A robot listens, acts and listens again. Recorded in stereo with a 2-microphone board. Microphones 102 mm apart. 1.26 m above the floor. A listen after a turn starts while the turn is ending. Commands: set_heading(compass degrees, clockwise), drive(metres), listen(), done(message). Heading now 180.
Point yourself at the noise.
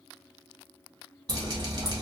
set_heading(220)
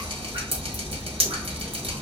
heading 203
set_heading(323)
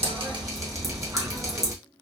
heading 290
set_heading(320)
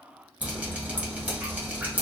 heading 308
set_heading(323)
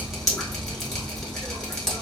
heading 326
done("Facing the dripping, 1 to 2 m away.")